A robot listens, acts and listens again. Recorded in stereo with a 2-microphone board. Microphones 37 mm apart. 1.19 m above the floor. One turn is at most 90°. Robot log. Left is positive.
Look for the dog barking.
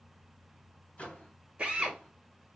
cmd idle
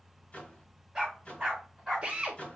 cmd yaw -30
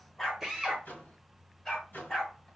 note: So it is at 10° left.
cmd yaw +10
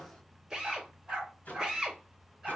end: Found it: a dog barking, straight ahead, over 4 m away.